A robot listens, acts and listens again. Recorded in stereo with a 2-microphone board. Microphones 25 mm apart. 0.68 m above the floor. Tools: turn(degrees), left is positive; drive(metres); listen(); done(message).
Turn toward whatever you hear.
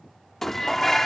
turn(degrees=30)
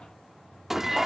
turn(degrees=-20)
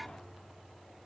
listen()
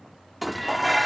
done("Found it: dishes clattering, straight ahead.")